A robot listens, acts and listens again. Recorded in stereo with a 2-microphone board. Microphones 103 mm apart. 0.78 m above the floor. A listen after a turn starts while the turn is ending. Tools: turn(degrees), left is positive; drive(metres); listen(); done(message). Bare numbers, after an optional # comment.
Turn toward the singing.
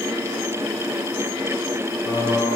# The singing: about 45° left or 135° left.
turn(45)
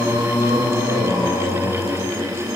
# So it is at 90° left.
turn(90)
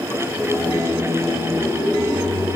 # The singing is now 25° left.
turn(25)
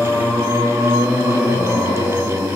# The singing is now 15° left.
turn(15)
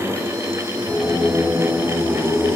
done("Found it: singing, straight ahead.")